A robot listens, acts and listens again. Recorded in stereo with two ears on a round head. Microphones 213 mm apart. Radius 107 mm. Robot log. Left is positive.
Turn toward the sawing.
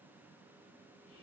cmd idle
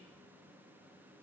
cmd idle
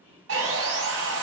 note: The sawing: about 55° right or 125° right.
cmd yaw -55
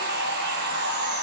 note: So it is at 55° right.
cmd yaw -55
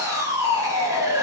note: The sawing is now 15° right.
cmd yaw -15
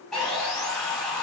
end: Facing the sawing, under 1 m away.